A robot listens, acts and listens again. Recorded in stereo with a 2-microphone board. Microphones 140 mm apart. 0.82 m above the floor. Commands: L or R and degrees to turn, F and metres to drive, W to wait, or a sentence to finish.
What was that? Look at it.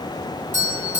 L65
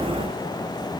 W
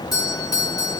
L30
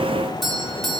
Found it: a doorbell, straight ahead, 2 to 4 m away.